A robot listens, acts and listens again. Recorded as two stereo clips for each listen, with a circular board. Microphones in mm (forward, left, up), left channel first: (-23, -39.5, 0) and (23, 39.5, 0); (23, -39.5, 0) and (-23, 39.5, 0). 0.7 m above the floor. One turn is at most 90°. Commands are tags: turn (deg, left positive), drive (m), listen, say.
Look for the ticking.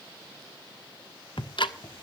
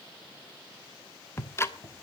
<turn deg="-90"/>
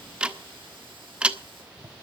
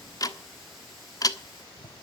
<turn deg="-15"/>
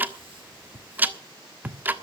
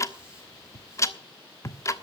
<turn deg="-10"/>
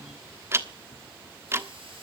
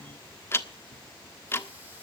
<say>Found it: ticking, straight ahead.</say>